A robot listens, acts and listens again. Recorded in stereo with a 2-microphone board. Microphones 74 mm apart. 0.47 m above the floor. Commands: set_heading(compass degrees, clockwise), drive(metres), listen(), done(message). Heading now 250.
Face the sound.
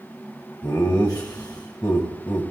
set_heading(185)
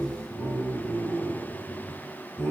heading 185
set_heading(145)
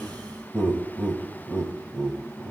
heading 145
set_heading(125)
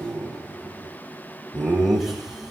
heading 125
done("Found it: laughter, straight ahead, 2 to 4 m away.")